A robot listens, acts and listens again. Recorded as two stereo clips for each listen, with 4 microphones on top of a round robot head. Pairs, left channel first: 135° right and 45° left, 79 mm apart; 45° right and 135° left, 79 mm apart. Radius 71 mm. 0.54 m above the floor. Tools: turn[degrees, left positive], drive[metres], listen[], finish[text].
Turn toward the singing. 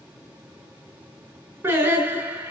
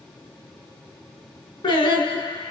Thought: The singing: 20° right.
Action: turn[-20]
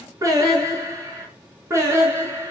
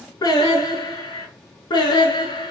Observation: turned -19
Thought: The singing is now 10° right.
Action: turn[-10]
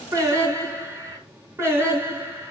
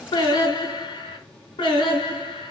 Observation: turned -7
Thought: The singing is now 15° right.
Action: turn[-15]
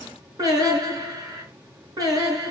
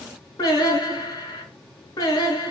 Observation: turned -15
Action: finish[Facing the singing.]